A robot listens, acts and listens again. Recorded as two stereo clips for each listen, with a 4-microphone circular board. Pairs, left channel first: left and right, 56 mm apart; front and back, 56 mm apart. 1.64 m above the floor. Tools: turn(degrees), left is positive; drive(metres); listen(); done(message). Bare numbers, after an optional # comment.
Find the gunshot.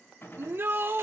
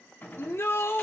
# The gunshot: 55° left.
turn(55)
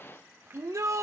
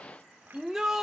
done("Facing where the gunshot came from. I can't hear it now.")